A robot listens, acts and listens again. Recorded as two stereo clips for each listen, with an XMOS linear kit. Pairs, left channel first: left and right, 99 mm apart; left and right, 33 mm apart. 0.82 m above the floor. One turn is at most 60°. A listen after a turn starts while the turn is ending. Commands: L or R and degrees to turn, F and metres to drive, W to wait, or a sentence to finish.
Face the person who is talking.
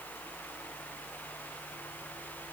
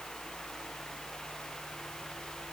W
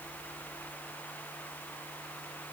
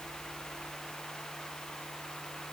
W
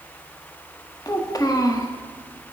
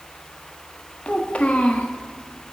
L35
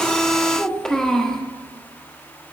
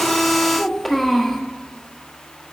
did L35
Facing the child speaking, 1 to 2 m away.